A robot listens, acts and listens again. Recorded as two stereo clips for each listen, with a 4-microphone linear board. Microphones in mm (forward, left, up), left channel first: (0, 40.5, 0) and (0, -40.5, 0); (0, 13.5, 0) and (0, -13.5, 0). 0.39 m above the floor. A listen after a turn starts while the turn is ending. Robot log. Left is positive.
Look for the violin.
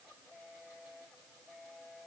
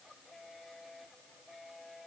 cmd idle
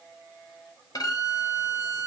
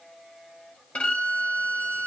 note: The violin: about 55° left or 125° left.
cmd yaw +55
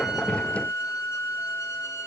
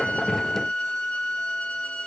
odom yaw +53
note: So it is at 50° left.
cmd yaw +50
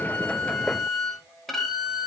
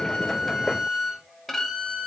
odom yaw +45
end: Found it: a violin, straight ahead.